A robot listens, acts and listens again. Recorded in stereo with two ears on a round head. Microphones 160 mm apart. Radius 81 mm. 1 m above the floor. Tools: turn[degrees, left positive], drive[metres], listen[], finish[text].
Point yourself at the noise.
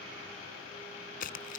Thought: The tearing paper: about 55° left or 125° left.
Action: turn[55]
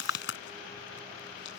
Thought: So it is at 70° left.
Action: turn[70]
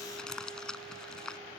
Action: finish[Found it: tearing paper, straight ahead.]